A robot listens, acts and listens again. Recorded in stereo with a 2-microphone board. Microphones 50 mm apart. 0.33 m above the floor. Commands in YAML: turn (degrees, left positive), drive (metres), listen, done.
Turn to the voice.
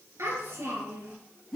turn: -65
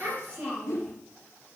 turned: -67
turn: -45
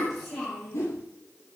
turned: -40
done: "Found it: a child speaking, straight ahead, over 4 m away."